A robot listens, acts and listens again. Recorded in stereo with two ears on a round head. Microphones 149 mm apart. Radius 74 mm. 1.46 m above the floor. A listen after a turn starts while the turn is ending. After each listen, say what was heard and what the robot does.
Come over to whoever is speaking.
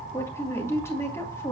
The woman speaking: about 15° left or 165° left. Turn 15° left.
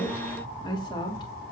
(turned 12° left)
So it is at 150° left. Turn 150° left.
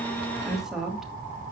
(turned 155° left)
Drive 1.0 m forward.
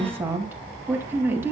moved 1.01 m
The woman speaking is now 15° right. Turn 15° right.
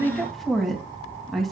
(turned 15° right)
Drive 1.0 m forward.
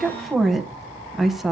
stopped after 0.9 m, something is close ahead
Arrived at the woman speaking, straight ahead.